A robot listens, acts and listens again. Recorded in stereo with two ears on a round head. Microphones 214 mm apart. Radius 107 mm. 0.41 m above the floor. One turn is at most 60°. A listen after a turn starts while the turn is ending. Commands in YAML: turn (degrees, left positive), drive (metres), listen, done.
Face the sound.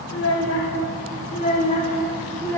turn: 30
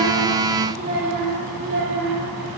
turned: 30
turn: -45
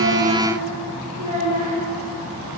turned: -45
turn: -25
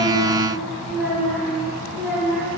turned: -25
done: "Facing the child speaking, 2 to 4 m away."